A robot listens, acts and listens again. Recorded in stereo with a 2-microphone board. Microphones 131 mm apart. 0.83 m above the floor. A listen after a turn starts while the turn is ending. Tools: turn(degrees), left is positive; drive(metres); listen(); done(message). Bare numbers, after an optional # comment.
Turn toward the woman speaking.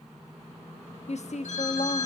# The woman speaking: about 60° left or 120° left.
turn(60)
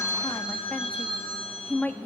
# So it is at 10° left.
turn(10)
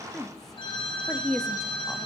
done("Facing the woman speaking.")